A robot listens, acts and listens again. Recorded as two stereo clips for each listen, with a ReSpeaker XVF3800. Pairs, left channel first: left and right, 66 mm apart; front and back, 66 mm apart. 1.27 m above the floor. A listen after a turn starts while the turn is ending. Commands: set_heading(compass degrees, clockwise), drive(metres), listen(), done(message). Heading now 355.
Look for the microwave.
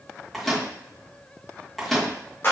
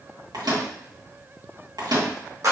set_heading(180)
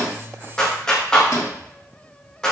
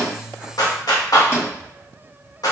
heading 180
set_heading(135)
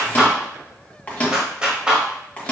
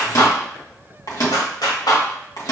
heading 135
set_heading(115)
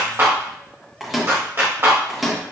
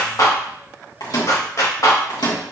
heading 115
done("Found it: a microwave, straight ahead, 1 to 2 m away.")